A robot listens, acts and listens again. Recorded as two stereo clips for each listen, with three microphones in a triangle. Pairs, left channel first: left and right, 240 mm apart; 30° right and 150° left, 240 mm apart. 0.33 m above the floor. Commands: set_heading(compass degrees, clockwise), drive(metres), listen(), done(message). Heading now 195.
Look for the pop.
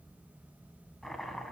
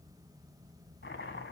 listen()
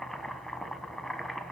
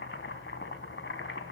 listen()
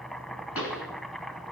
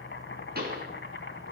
set_heading(90)
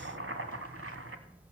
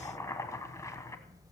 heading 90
done("Facing where the pop came from. I can't hear it now.")